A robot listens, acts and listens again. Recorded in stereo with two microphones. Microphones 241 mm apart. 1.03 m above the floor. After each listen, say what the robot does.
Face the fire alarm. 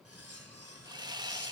Keep listening.
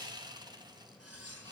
Keep listening.
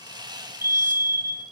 Turn 40° right.
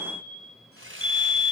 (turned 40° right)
Found it: a fire alarm, straight ahead.